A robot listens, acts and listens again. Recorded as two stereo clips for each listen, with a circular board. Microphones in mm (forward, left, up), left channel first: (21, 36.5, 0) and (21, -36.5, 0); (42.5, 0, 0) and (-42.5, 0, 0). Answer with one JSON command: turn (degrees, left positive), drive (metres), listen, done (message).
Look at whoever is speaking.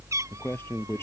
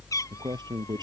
{"turn": 145}
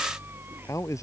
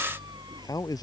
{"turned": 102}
{"turn": 45}
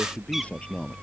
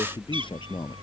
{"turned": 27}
{"turn": 20}
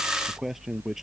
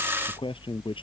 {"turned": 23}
{"done": "Facing the man speaking."}